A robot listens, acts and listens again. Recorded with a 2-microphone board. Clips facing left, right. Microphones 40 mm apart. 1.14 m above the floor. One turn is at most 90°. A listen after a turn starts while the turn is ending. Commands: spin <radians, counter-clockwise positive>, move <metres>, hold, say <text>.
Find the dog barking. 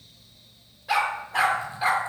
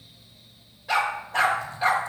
spin 0.52
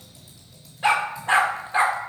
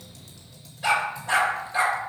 spin 1.57
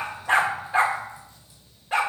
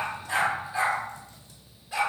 spin 0.96
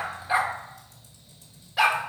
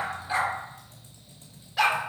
say Found it: a dog barking, straight ahead, 1 to 2 m away.